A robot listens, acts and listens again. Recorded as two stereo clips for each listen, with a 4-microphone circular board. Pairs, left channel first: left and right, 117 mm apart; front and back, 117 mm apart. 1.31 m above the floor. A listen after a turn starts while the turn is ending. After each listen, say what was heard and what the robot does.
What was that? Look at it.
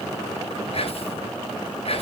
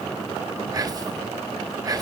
The whispering: 120° left. Turn 120° left.
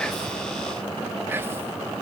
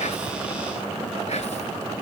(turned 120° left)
The whispering is now 20° right. Turn 20° right.
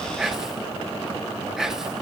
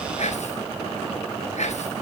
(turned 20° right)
Facing the whispering, 1 to 2 m away.